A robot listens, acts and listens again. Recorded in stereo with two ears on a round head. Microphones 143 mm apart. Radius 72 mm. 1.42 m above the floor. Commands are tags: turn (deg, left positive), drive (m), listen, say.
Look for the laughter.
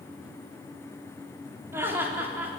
<turn deg="-30"/>
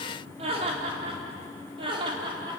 <turn deg="-150"/>
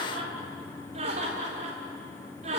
<turn deg="-45"/>
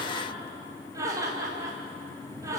<turn deg="-20"/>
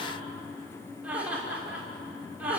<turn deg="-10"/>
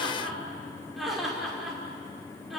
<say>Facing the laughter, over 4 m away.</say>